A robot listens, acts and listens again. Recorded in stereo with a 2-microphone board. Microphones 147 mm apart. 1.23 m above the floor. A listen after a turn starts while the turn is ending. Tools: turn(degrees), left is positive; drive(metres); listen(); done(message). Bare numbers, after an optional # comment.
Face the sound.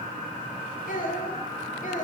# The child speaking: about 65° left or 115° left.
turn(65)
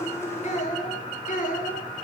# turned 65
# So it is at 60° left.
turn(60)
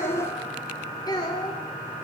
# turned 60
# The child speaking is now 30° left.
turn(30)
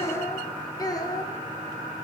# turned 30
# The child speaking is now 25° left.
turn(25)
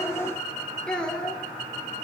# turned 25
done("Facing the child speaking.")